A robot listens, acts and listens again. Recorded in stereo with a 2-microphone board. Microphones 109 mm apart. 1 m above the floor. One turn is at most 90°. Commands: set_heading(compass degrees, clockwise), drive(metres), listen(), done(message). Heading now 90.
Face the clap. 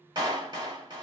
set_heading(130)
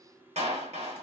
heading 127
set_heading(217)
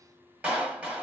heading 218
set_heading(228)
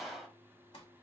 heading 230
done("Found it: a clap, straight ahead.")